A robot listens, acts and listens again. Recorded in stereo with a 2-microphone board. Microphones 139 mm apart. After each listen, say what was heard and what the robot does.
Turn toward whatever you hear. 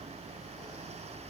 Keep listening.
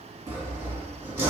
The sawing: about 20° right or 160° right. Turn 20° right.
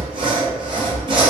So it is at 140° right. Turn 140° right.
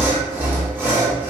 The sawing is now 10° right. Turn 10° right.
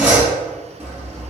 Found it: sawing, straight ahead.